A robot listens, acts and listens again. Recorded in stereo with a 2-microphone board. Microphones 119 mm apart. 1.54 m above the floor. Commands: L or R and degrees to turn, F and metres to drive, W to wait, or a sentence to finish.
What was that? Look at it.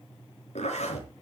L75
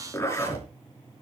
L25
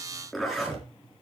Found it: a zipper, straight ahead, over 4 m away.